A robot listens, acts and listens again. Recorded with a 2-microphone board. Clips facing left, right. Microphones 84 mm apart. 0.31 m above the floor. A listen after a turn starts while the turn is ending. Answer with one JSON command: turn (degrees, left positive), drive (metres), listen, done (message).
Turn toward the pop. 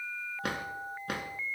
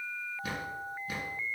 {"listen": true}
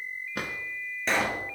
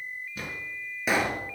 {"turn": -30}
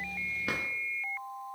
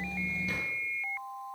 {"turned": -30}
{"listen": true}
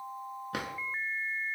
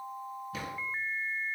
{"done": "I heard a pop, but can't make it out now. It was about 20° left or 140° right."}